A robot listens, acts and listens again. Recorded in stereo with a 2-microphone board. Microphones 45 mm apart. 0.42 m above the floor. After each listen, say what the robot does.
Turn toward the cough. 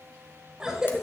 Turn 30° right.
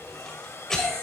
Turn 15° left.
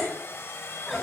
Facing the cough, 1 to 2 m away.